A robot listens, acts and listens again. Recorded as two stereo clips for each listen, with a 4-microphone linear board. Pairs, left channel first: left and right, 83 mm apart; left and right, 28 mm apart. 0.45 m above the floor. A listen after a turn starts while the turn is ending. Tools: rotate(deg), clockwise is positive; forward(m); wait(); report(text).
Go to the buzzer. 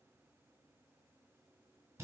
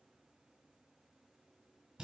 wait()
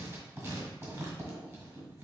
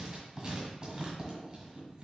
wait()
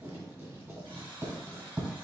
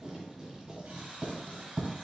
rotate(90)
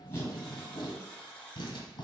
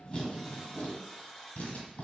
rotate(-15)
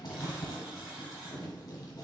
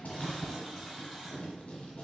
forward(1.0)
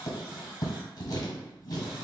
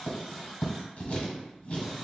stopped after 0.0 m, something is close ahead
report("Blocked. The buzzer is further on, straight ahead.")